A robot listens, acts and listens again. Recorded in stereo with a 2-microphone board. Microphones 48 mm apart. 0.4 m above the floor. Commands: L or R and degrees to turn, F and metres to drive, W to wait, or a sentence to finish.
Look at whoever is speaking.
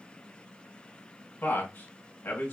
L45
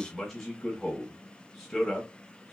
L10
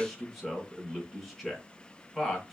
Found it: a man speaking, straight ahead, 1 to 2 m away.